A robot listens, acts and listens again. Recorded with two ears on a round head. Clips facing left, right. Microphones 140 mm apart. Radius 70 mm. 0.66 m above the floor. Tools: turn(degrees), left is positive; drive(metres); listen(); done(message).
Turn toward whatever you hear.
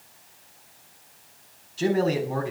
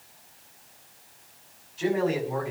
turn(degrees=45)
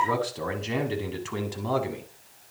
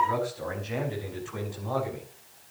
turn(degrees=75)
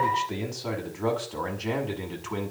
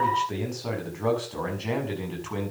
done("Facing the man speaking, over 4 m away.")